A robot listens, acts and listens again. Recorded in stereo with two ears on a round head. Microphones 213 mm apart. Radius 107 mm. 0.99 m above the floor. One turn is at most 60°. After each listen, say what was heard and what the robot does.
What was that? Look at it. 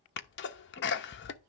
The sneeze: about 50° left or 130° left. Turn 50° left.
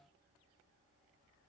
Keep listening.
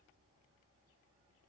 I heard a sneeze, but can't make it out now. It was about straight ahead or 80° left.